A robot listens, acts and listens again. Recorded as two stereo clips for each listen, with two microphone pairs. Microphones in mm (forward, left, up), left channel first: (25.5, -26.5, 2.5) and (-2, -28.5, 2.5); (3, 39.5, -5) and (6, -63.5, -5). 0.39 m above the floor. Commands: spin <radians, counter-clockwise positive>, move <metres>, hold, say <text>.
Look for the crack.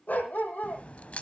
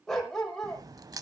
spin -0.61
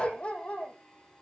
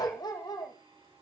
say I heard a crack from this way, but can't make it out now.